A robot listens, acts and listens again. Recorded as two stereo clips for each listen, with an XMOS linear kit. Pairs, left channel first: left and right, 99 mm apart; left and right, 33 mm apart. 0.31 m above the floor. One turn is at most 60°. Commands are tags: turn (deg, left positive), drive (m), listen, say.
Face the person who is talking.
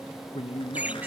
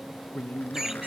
<turn deg="60"/>
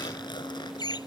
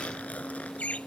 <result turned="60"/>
<listen/>
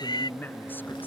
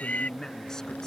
<turn deg="20"/>
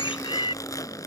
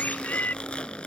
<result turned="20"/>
<listen/>
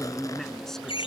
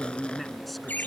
<say>Found it: a man speaking, straight ahead.</say>